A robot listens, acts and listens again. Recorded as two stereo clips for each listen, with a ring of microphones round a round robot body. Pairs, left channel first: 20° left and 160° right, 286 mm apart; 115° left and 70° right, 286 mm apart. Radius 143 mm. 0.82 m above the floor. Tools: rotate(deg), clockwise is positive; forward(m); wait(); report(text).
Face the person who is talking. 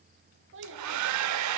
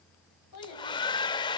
rotate(-150)
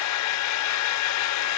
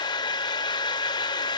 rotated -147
wait()
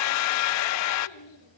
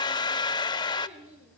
report("Facing the child speaking.")